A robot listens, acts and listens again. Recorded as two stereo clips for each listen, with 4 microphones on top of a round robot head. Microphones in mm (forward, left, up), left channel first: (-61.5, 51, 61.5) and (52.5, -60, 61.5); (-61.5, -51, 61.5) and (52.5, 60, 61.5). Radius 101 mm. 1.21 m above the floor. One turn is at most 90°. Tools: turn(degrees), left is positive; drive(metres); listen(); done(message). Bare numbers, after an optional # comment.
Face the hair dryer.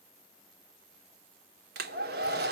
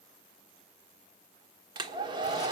# The hair dryer: 20° right.
turn(-20)
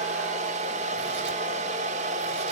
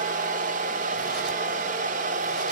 done("Facing the hair dryer.")